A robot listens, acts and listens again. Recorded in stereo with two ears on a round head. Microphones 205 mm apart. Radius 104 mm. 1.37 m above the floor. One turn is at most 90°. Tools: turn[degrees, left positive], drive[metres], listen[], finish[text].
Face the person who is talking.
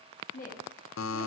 Thought: The woman speaking: about 40° left or 140° left.
Action: turn[40]
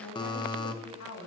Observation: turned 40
Thought: So it is at 100° left.
Action: turn[90]
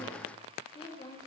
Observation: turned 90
Thought: The woman speaking is now 25° left.
Action: turn[25]
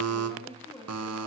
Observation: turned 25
Thought: The woman speaking is now 10° left.
Action: turn[10]
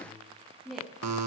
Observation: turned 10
Action: finish[Facing the woman speaking, 2 to 4 m away.]